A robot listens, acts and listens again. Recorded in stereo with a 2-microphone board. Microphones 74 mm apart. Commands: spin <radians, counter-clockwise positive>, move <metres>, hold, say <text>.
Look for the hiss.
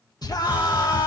spin -0.44
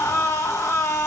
hold
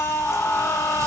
hold
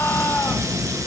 spin -2.27
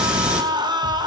spin -0.26
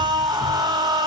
hold
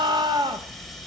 say Found it: a hiss, straight ahead, 2 to 4 m away.